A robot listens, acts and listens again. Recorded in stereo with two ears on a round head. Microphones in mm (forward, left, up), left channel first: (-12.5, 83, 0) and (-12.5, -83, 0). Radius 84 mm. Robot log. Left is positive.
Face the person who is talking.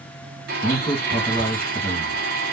cmd yaw +30
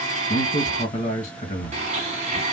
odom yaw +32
note: So it is at 145° left.
cmd yaw +145
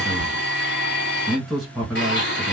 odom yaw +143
end: Found it: a man speaking, straight ahead, 1 to 2 m away.